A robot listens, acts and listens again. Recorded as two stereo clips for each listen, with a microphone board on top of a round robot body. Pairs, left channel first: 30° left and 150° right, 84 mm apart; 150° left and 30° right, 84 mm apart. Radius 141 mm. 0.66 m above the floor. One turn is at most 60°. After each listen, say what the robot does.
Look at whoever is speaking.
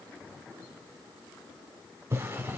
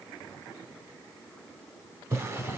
Keep listening.
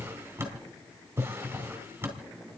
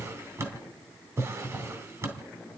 Keep listening.
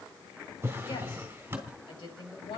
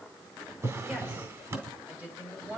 Turn 40° left.
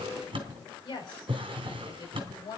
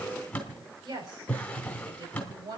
Facing the woman speaking.